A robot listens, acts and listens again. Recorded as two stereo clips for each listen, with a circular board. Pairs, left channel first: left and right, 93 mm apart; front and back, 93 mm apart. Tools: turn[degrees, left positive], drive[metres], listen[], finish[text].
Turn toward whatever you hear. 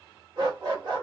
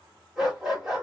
Thought: The dog barking: 95° right.
Action: turn[-95]
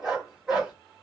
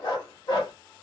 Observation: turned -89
Thought: The dog barking is now 10° right.
Action: turn[-10]
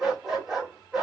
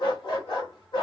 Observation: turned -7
Action: finish[Found it: a dog barking, straight ahead.]